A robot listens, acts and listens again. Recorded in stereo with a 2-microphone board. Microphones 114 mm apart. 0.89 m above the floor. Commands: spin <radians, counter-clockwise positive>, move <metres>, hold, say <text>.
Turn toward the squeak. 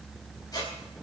spin 0.61
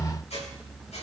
spin 1.92
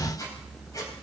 spin 0.61
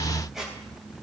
say Facing the squeak, 2 to 4 m away.